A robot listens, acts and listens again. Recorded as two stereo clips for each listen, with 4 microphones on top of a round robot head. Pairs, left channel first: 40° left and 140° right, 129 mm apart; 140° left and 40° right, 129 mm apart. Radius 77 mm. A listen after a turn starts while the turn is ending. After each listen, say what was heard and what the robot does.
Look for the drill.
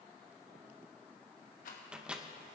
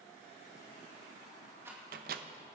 Keep listening.
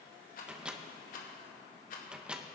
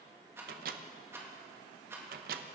Keep listening.
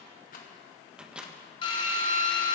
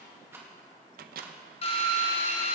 The drill: 95° left. Turn 95° left.
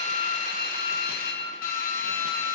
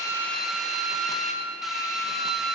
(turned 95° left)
The drill is now 45° left. Turn 45° left.
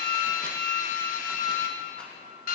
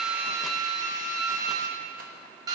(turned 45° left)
The drill is now 20° left. Turn 20° left.
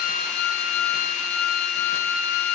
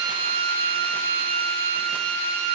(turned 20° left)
Facing the drill.